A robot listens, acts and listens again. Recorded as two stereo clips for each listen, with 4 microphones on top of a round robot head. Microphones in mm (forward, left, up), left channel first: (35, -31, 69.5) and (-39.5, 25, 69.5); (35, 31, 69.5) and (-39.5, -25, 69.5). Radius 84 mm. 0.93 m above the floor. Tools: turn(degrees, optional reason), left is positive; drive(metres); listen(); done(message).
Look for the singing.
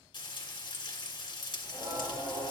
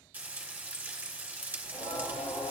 turn(degrees=75, reason="The singing: 75° left.")
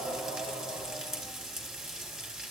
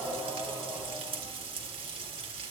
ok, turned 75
turn(degrees=10, reason="The singing is now 10° left.")
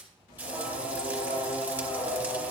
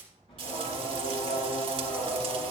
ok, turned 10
done("Found it: singing, straight ahead, over 4 m away.")